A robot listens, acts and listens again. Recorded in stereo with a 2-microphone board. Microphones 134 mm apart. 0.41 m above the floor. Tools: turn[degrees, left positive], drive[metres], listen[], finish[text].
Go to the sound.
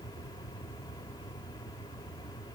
Action: listen[]
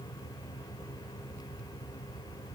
Action: listen[]
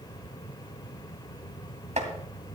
Thought: The chopping: about 60° right or 120° right.
Action: turn[-60]
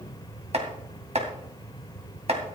Thought: So it is at 60° right.
Action: turn[-60]
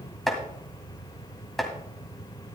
Action: drive[1.0]
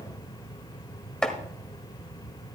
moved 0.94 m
Action: drive[1.0]
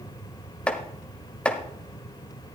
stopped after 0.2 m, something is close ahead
Thought: The chopping is now 10° left.
Action: turn[10]
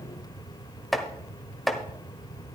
Action: finish[I am next to the chopping.]